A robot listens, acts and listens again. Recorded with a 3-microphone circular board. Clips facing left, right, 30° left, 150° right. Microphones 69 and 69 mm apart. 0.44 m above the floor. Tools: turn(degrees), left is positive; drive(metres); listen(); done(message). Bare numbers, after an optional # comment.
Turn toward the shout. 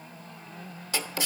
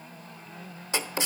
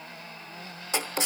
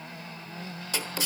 listen()
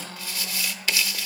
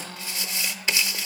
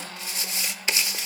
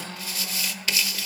listen()
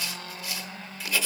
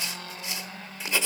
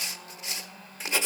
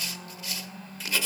done("I can't make out a shout to turn to.")